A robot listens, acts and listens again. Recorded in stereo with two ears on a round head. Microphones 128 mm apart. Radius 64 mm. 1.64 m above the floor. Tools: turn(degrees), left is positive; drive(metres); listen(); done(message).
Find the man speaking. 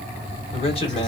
turn(degrees=40)
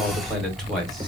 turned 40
done("Facing the man speaking.")